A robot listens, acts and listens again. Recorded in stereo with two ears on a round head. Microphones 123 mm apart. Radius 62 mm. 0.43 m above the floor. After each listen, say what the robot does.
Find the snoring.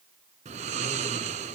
Turn 50° right.
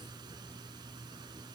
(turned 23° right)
Turn 30° right.
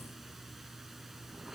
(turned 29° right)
Facing the snoring.